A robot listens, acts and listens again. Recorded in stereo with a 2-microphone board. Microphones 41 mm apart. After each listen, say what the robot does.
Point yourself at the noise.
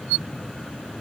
Keep listening.
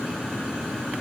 Keep listening.
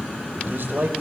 Turn 70° right.
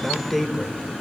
Found it: a man speaking, straight ahead, 2 to 4 m away.